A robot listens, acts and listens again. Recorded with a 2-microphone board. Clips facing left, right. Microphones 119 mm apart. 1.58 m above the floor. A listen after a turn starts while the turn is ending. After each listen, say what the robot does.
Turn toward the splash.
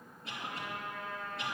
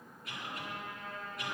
Keep listening.
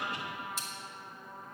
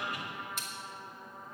Turn 55° right.
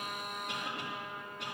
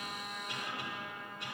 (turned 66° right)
Keep listening.
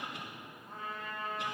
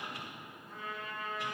I heard a splash, but can't make it out now. It was about 10° left or 60° right.